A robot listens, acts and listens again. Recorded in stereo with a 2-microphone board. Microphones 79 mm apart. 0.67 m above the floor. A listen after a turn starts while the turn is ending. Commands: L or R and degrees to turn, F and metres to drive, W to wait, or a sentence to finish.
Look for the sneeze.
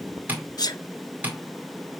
L60
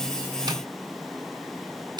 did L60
W
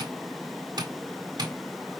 I heard a sneeze, but can't make it out now. It was about straight ahead or 60° left.